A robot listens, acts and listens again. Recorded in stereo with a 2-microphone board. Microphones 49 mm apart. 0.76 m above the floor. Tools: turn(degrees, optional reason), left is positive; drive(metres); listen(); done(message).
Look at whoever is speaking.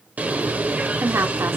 turn(degrees=-60, reason="The woman speaking: about 60° right or 120° right.")
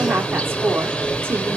turn(degrees=-55, reason="So it is at 55° right.")
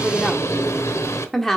turn(degrees=10, reason="The woman speaking is now 10° left.")
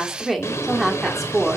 done("Facing the woman speaking.")